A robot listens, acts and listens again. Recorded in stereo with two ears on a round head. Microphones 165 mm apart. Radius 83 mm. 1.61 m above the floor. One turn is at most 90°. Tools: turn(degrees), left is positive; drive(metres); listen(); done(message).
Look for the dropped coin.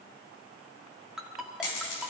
turn(degrees=75)
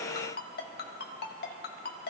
listen()
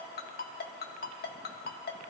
done("I heard a dropped coin, but can't make it out now. It was about straight ahead or 30° left.")